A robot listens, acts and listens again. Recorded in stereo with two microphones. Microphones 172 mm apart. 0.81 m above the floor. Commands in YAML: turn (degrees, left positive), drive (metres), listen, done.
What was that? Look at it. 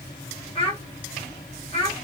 turn: 35
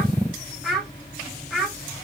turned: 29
done: "Found it: a child speaking, straight ahead, 1 to 2 m away."